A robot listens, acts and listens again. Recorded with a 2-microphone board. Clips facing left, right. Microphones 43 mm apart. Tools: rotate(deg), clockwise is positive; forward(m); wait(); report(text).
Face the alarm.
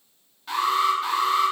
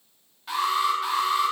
rotate(30)
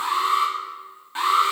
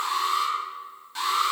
rotate(-25)
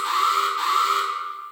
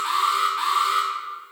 rotate(10)
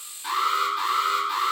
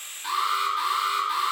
report("Found it: an alarm, straight ahead, 2 to 4 m away.")